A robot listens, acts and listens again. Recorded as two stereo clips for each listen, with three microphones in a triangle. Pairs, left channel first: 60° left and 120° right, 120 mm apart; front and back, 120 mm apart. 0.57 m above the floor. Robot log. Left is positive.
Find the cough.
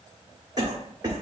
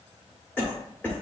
note: The cough: 70° right.
cmd yaw -70
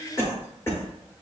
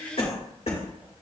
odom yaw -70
note: The cough is now 10° right.
cmd yaw -10
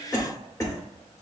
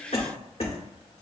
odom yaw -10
end: Facing the cough.